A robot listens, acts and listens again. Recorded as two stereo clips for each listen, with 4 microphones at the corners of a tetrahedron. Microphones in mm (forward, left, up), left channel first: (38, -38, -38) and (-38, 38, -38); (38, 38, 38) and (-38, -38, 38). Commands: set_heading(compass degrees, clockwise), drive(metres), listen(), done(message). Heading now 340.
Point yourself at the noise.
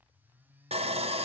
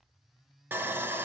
set_heading(185)
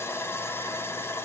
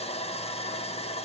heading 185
set_heading(160)
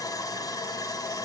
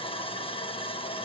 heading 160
set_heading(150)
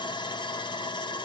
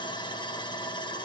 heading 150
done("Found it: sawing, straight ahead.")